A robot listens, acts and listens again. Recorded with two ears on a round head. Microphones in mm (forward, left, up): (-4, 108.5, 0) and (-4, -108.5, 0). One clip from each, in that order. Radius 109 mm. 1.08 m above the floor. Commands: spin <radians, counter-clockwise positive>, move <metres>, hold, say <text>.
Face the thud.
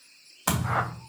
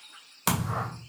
spin -0.70
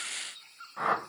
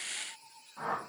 hold
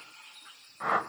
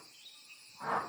say I heard a thud, but can't make it out now. It was about straight ahead or 100° right.